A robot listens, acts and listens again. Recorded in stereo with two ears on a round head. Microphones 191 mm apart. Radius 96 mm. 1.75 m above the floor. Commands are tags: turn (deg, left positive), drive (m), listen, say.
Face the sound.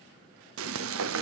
<turn deg="-65"/>
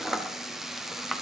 <say>Facing the frying.</say>